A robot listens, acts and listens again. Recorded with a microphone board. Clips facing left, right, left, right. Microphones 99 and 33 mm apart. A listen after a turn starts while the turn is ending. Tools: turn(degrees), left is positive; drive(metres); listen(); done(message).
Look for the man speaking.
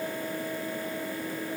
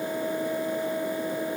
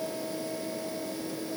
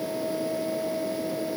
listen()
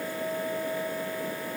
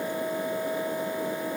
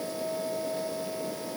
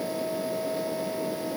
listen()
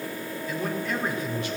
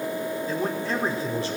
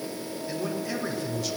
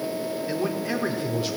turn(degrees=-30)
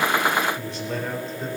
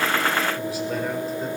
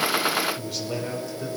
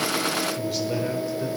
done("Facing the man speaking.")